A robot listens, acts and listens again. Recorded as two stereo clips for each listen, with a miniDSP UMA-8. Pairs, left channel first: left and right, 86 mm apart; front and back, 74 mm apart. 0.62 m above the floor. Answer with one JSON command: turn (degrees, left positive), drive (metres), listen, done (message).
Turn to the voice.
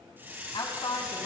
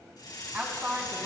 {"turn": 110}
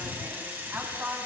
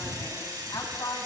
{"turn": -20}
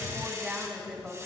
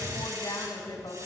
{"turn": -10}
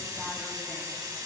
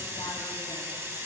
{"listen": true}
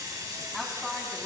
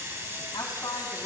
{"done": "Found it: a woman speaking, straight ahead, over 4 m away."}